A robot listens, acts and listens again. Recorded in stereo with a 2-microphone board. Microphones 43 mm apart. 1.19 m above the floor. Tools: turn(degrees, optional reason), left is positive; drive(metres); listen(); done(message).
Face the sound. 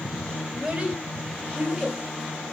turn(degrees=-20, reason="The child speaking: about 20° right or 160° right.")
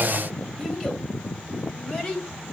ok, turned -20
turn(degrees=10, reason="So it is at 10° left.")
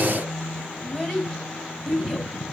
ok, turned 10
turn(degrees=10, reason="The child speaking is now 10° left.")
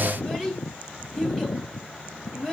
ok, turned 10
done("Found it: a child speaking, straight ahead, over 4 m away.")